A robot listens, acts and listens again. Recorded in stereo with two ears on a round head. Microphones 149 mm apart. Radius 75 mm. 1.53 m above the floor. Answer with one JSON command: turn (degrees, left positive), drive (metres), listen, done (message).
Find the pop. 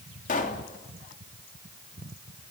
{"turn": 50}
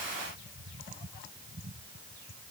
{"listen": true}
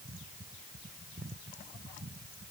{"done": "I heard a pop, but can't make it out now. It was about straight ahead or 80° left."}